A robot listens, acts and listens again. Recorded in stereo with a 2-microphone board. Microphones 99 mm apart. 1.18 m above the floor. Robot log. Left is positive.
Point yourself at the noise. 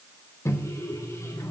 note: The microwave: about 25° left or 155° left.
cmd yaw +25
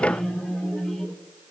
end: Found it: a microwave, straight ahead, 1 to 2 m away.